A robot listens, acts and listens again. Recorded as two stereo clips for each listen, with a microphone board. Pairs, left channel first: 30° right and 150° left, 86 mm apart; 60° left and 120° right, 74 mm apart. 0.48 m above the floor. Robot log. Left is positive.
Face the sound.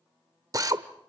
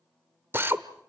note: The drill: 175° right.
cmd yaw -175
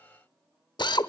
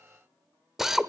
note: The drill is now 35° right.
cmd yaw -35
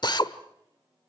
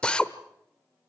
note: The drill is now 15° right.
cmd yaw -15
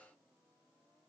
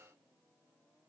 cmd idle
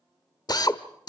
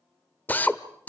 end: Facing the drill, 1 to 2 m away.